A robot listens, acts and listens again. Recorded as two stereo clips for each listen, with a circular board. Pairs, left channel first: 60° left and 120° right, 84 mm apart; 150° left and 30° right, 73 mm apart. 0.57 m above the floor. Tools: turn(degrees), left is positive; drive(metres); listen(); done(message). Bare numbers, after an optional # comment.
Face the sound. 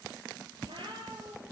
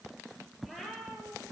# The cat meowing: 115° right.
turn(-115)
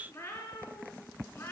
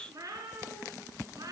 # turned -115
done("Found it: a cat meowing, straight ahead.")